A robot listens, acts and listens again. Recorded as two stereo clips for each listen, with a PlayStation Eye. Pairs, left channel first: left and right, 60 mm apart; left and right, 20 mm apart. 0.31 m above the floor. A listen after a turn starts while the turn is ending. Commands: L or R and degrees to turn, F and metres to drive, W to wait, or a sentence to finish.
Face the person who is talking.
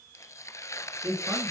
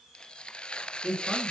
R50
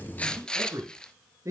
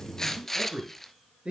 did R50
R65
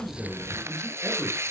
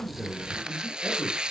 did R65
W
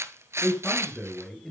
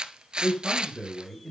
Found it: a man speaking, straight ahead, over 4 m away.